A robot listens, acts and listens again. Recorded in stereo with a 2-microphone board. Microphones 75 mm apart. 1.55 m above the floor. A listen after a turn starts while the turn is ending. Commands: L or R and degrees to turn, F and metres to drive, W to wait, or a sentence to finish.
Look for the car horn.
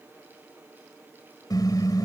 L55
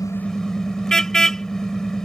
L10
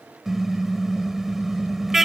Found it: a car horn, straight ahead.